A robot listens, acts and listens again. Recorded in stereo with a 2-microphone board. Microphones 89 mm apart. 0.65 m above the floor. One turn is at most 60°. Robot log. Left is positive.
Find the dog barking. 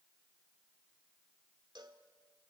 cmd idle
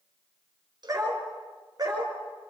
note: The dog barking: about 50° right or 130° right.
cmd yaw -50
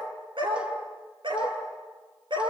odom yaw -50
note: So it is at 65° right.
cmd yaw -60
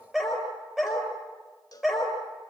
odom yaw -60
end: Facing the dog barking, over 4 m away.